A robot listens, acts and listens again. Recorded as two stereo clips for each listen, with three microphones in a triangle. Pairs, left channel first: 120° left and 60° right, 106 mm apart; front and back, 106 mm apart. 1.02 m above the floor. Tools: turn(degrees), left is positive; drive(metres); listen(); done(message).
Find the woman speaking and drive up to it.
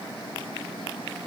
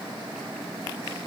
listen()
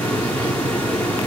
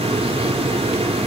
listen()
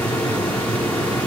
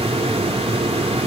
done("I can't make out a woman speaking to turn to.")